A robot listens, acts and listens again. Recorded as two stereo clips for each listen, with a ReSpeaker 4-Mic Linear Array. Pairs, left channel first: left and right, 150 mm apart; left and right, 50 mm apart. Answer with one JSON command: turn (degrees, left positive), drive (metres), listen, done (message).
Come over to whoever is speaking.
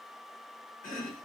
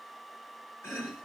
{"listen": true}
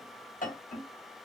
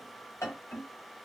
{"listen": true}
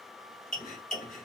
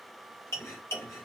{"done": "I can't make out anyone speaking to turn to."}